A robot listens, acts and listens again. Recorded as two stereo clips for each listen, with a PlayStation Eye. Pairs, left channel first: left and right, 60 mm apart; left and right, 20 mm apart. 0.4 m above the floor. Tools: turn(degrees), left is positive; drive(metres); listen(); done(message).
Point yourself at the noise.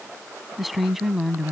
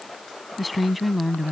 turn(degrees=-30)
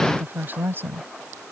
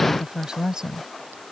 turn(degrees=-140)
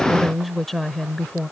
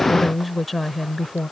turn(degrees=20)
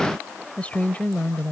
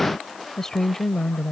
turn(degrees=30)
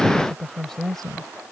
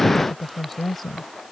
done("Facing the woman speaking.")